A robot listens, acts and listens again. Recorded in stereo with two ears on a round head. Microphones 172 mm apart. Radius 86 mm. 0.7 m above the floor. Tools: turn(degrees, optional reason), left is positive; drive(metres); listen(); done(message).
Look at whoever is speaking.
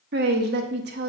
turn(degrees=-55, reason="The woman speaking: about 55° right or 125° right.")
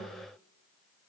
listen()
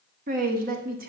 turn(degrees=-55, reason="So it is at 55° right.")
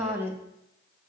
turn(degrees=-15, reason="The woman speaking is now 15° right.")
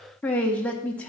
done("Facing the woman speaking.")